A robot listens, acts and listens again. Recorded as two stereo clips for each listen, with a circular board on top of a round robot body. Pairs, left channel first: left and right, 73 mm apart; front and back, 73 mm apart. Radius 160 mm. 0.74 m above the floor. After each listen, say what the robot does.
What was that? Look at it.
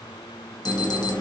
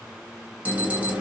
Turn 110° left.
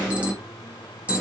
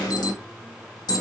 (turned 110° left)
Turn 20° right.
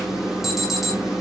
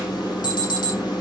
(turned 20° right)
Found it: an alarm, straight ahead, 1 to 2 m away.